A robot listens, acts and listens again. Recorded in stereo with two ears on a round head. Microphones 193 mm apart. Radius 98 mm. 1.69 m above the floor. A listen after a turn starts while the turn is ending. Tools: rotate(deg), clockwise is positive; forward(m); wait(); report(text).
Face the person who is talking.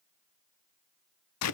wait()
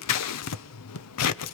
wait()
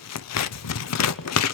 report("I can't make out anyone speaking to turn to.")